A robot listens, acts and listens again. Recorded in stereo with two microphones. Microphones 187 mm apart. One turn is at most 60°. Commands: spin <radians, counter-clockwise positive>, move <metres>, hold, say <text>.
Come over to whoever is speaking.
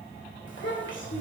spin 1.05
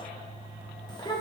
spin 0.44
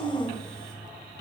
move 1.0
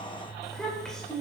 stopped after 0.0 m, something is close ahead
say Blocked. The child speaking is further on, straight ahead.